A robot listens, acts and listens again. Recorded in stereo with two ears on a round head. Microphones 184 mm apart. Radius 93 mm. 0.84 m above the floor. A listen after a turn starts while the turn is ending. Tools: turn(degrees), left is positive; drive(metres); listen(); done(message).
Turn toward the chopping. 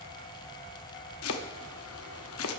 turn(degrees=90)
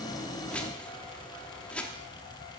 done("Found it: chopping, straight ahead.")